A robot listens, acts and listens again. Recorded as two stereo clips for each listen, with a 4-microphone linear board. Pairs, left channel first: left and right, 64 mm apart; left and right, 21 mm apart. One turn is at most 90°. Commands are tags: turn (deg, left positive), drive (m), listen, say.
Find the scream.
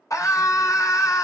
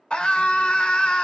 <turn deg="55"/>
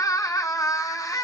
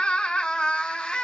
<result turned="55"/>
<turn deg="65"/>
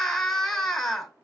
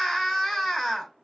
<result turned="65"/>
<say>Facing the scream, 1 to 2 m away.</say>